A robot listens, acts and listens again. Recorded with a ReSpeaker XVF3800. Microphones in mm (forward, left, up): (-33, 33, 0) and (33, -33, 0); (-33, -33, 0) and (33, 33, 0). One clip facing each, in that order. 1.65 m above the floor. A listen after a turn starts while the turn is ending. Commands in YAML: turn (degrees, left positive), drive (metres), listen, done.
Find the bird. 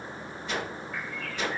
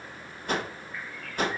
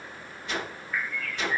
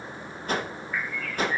turn: 135
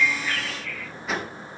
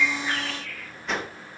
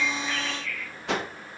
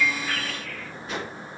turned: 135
done: "Facing the bird, 1 to 2 m away."